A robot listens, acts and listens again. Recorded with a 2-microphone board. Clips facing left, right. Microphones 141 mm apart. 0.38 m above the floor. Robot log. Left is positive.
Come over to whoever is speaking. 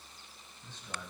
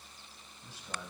cmd yaw -30
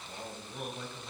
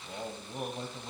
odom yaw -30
note: So it is at 140° right.
cmd yaw -140
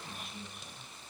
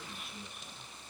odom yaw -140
cmd fwd 1.0
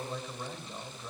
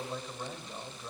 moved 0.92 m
cmd fwd 1.0
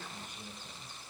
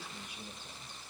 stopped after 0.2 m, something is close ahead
note: The man speaking is now 15° right.
cmd yaw -15
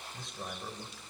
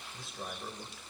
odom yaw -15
end: I am next to the man speaking.